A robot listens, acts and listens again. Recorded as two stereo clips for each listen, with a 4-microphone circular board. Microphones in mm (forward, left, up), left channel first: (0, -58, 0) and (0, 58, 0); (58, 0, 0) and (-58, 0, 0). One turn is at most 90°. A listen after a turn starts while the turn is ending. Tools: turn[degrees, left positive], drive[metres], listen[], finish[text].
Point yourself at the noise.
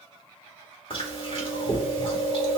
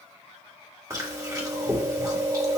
Thought: The chewing: 125° right.
Action: turn[-90]
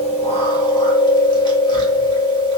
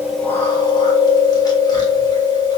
Thought: The chewing is now 50° right.
Action: turn[-50]
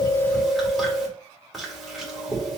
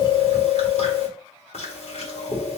Action: finish[Found it: chewing, straight ahead.]